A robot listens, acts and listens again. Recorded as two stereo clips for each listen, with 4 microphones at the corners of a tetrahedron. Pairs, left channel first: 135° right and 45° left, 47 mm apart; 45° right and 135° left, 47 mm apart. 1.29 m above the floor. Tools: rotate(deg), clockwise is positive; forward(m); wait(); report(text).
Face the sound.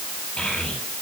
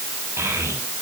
rotate(-160)
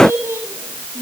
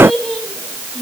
rotate(-40)
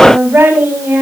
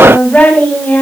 rotate(-15)
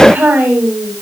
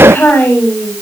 report("Facing the child speaking.")